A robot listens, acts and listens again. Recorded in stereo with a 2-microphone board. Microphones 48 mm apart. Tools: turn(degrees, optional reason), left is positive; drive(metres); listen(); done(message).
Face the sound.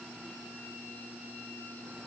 listen()
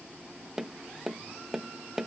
turn(degrees=-30)
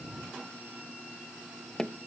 turn(degrees=20, reason="So it is at 20° left.")
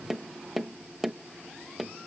done("Facing the tapping.")